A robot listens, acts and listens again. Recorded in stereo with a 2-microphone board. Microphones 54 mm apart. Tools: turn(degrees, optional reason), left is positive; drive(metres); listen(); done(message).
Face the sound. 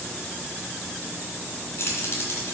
turn(degrees=50, reason="The keys jangling: about 50° left or 130° left.")
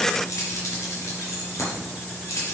turn(degrees=75, reason="So it is at 75° left.")
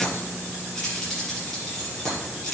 done("Found it: keys jangling, straight ahead, over 4 m away.")